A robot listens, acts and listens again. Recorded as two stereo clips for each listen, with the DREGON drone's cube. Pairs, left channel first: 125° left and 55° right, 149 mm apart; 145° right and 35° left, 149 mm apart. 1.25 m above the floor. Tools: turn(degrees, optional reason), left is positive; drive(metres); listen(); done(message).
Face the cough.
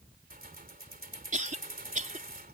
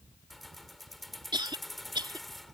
turn(degrees=-25, reason="The cough: 25° right.")
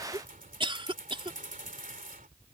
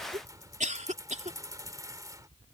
done("Found it: a cough, straight ahead.")